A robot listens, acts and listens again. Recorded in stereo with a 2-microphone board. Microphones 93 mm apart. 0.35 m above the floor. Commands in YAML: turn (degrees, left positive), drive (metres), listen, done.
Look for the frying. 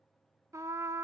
listen: true
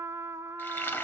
turn: 20
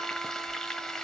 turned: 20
done: "Facing the frying, 1 to 2 m away."